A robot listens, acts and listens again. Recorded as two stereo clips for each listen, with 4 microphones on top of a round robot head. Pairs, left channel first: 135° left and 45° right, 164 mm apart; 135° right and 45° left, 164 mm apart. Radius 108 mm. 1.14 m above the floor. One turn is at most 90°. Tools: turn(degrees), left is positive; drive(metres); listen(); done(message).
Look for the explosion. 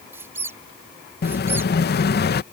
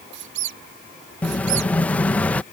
turn(degrees=90)
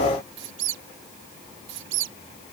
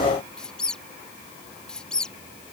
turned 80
turn(degrees=65)
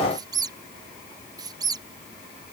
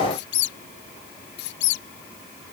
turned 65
done("I heard an explosion from this way, but can't make it out now.")